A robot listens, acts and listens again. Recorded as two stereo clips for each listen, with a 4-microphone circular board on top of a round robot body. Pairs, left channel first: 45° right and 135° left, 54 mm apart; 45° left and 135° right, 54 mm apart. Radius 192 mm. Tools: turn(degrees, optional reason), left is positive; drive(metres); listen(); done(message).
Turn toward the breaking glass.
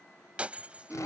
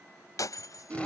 turn(degrees=65, reason="The breaking glass: 65° left.")
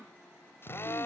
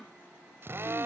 done("I heard breaking glass from this way, but can't make it out now.")